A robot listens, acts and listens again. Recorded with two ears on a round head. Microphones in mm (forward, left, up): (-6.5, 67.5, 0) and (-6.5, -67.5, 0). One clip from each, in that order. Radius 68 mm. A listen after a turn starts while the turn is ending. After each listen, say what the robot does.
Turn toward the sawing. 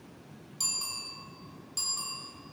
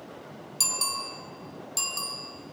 Keep listening.
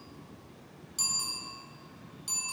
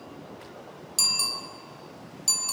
Keep listening.
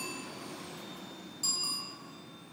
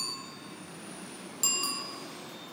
I can't make out sawing to turn to.